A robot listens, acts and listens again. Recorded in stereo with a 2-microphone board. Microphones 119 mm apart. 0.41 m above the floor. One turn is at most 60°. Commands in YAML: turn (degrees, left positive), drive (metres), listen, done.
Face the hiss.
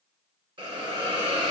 turn: -45
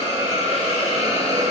turn: -60
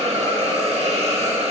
turn: -60
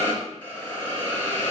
turn: 15
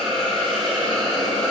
done: "Found it: a hiss, straight ahead."